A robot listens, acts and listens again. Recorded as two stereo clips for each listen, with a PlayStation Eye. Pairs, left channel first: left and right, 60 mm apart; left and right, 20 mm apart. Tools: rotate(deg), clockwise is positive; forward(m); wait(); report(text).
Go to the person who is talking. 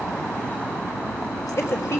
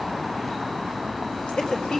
rotate(-50)
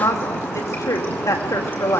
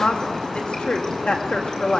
rotate(-75)
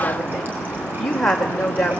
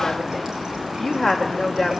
forward(1.0)
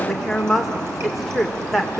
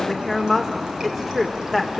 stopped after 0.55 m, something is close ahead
report("Something is in my way. I am facing the woman speaking but have not reached it.")